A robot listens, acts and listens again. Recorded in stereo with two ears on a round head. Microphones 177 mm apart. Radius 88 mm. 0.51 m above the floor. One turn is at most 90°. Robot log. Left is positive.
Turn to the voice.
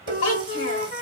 note: The child speaking: about 65° left or 115° left.
cmd yaw +65
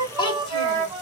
note: So it is at 25° left.
cmd yaw +25
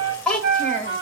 note: The child speaking is now 10° left.
cmd yaw +10
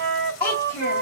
note: The child speaking is now 15° left.
cmd yaw +15
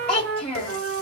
note: The child speaking is now 10° left.
cmd yaw +10
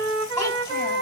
note: The child speaking is now 10° left.
cmd yaw +10
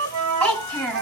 end: Facing the child speaking.